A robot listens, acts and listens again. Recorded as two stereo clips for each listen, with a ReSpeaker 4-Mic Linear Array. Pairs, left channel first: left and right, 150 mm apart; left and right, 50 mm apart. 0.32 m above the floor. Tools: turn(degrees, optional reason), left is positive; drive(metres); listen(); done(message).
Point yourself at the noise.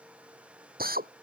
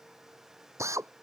turn(degrees=-90)
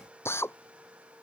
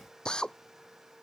turn(degrees=15, reason="So it is at 15° left.")
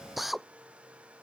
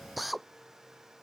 done("Facing the drill.")